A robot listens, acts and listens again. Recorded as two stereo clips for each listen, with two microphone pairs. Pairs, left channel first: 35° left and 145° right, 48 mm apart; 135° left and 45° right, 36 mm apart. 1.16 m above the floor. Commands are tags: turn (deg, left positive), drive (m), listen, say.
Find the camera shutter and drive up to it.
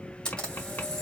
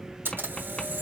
<turn deg="-40"/>
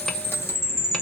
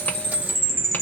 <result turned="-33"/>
<listen/>
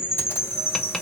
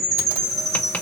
<listen/>
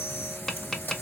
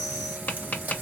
<turn deg="-10"/>
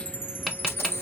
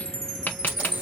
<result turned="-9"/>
<listen/>
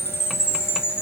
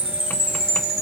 <listen/>
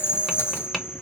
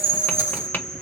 <say>I heard a camera shutter from this way, but can't make it out now. I did not reach it.</say>